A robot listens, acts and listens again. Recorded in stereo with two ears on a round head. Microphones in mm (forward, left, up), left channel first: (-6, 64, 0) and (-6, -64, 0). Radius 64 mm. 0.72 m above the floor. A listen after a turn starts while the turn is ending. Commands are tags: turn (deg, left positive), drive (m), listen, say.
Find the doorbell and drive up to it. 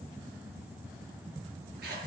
<listen/>
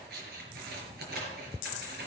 <listen/>
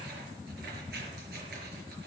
<say>I can't make out a doorbell, only scissors.</say>